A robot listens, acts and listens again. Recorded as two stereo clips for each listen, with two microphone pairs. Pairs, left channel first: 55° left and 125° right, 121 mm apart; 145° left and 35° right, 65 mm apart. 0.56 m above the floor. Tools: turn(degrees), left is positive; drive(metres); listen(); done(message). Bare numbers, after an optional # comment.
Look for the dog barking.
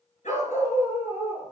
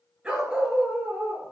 # The dog barking: 30° left.
turn(30)
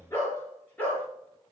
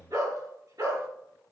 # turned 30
# The dog barking is now 25° right.
turn(-25)
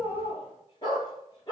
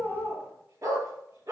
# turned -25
done("Facing the dog barking, over 4 m away.")